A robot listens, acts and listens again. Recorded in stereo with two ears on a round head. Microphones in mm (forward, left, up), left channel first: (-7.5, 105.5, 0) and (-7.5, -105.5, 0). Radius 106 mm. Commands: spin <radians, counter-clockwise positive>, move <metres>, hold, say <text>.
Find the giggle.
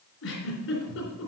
spin 1.05
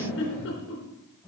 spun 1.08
spin 0.96
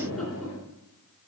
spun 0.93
say Found it: a giggle, straight ahead.